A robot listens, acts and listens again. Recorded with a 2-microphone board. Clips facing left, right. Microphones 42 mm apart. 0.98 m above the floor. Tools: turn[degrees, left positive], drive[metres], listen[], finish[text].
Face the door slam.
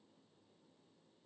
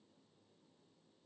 Action: listen[]
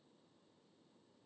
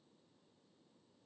Action: listen[]
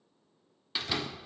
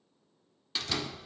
Thought: The door slam: about 15° left or 165° left.
Action: turn[15]
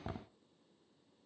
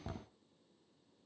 Thought: So it is at 150° left.
Action: turn[150]
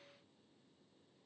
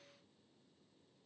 Action: finish[I heard a door slam from this way, but can't make it out now.]